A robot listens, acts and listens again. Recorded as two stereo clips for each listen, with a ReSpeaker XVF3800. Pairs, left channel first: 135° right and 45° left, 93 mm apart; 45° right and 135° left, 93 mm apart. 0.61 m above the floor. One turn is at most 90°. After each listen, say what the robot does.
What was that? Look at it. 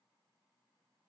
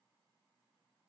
Keep listening.
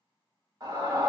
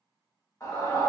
Turn 10° left.
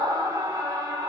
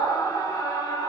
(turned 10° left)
Found it: a scream, straight ahead, 1 to 2 m away.